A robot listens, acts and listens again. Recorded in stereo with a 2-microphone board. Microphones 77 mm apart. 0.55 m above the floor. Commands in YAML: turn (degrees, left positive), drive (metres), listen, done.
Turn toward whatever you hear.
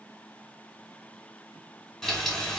turn: 30
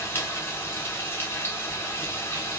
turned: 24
turn: 155
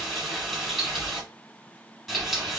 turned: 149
done: "Found it: frying, straight ahead, 1 to 2 m away."